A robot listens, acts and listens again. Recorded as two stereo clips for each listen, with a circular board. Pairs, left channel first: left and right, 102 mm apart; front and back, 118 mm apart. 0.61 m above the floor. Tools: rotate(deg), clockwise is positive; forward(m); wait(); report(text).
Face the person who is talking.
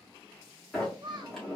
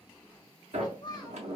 rotate(50)
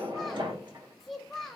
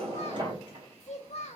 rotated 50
report("Facing the child speaking.")